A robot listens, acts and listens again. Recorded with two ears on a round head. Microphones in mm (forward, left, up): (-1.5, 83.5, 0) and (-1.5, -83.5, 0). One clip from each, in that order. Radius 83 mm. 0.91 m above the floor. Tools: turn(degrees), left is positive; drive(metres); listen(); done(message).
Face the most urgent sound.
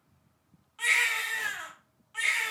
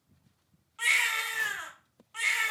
turn(degrees=-30)
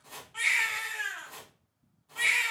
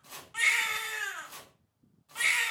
turn(degrees=-135)
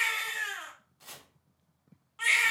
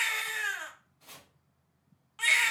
turn(degrees=-30)
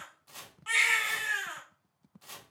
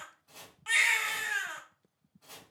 turn(degrees=-10)
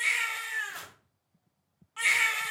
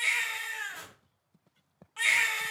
done("Facing the baby crying.")